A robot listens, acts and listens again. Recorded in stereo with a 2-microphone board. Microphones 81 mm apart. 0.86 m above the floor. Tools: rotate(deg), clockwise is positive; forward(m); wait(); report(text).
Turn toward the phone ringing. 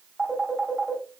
rotate(30)
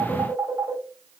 rotate(145)
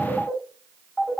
report("Facing the phone ringing.")